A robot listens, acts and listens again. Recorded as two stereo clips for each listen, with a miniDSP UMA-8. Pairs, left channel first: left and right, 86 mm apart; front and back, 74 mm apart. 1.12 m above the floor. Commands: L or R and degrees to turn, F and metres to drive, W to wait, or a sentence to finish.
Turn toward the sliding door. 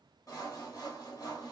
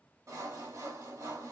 W
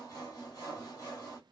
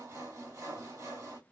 W
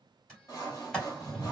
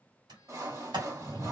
L170
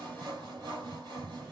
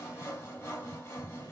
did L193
R25
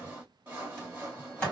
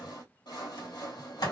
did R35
L10
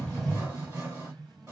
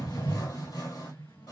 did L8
Facing the sliding door, 1 to 2 m away.